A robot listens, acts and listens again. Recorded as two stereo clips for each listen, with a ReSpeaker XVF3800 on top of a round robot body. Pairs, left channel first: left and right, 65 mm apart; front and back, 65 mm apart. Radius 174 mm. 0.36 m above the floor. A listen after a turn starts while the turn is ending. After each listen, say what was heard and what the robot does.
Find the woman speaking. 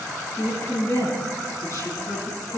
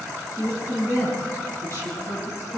The woman speaking: 135° left. Turn 135° left.
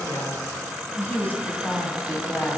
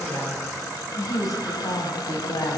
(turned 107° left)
The woman speaking is now 30° left. Turn 30° left.
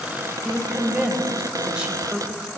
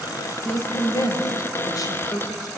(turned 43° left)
The woman speaking is now 15° right. Turn 15° right.
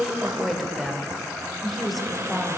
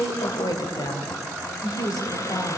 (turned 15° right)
Found it: a woman speaking, straight ahead.